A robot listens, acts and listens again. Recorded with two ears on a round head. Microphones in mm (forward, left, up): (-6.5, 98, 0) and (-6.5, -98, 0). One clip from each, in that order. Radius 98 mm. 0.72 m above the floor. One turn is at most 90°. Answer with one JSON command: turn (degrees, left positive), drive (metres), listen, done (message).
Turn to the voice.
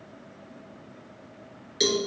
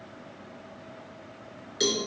{"listen": true}
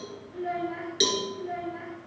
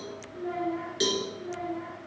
{"turn": 35}
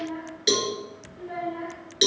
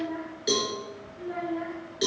{"done": "Facing the child speaking."}